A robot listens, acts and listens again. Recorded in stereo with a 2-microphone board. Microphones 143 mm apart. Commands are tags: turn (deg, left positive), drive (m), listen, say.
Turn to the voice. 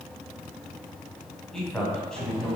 <turn deg="30"/>
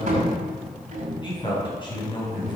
<turn deg="145"/>
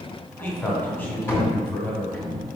<turn deg="10"/>
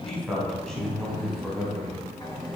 <say>Found it: a man speaking, straight ahead, 2 to 4 m away.</say>